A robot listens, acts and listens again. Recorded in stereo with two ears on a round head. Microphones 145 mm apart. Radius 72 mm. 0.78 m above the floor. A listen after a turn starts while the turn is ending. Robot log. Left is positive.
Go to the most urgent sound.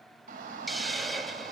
note: The shout: about 55° right or 125° right.
cmd yaw -55
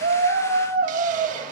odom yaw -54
note: So it is at 70° right.
cmd yaw -70
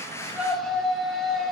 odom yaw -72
cmd fwd 1.0
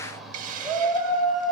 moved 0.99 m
cmd fwd 1.0
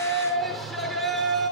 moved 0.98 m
cmd fwd 1.0
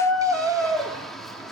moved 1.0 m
cmd fwd 1.0
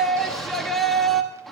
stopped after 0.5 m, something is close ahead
end: I am next to the shout.